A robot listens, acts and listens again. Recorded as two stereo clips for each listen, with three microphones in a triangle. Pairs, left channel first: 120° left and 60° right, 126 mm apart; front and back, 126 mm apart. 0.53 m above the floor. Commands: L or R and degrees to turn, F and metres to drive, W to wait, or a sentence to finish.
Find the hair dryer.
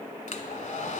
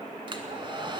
L130
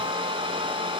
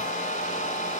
R15
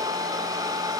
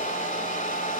Found it: a hair dryer, straight ahead, 1 to 2 m away.